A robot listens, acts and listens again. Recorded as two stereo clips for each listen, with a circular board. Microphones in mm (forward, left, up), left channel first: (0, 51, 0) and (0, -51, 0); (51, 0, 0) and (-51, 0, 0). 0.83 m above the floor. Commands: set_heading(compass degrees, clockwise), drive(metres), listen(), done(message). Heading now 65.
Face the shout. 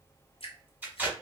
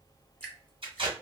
listen()
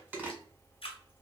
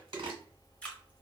listen()
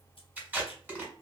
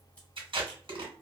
done("I can't make out a shout, only tape being pulled and dripping.")